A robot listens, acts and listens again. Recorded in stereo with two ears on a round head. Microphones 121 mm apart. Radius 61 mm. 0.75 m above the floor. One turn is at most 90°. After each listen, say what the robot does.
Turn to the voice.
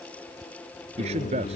Turn 50° right.
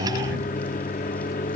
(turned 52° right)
Keep listening.
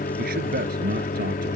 Turn 80° right.
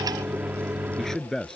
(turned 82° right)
Facing the man speaking.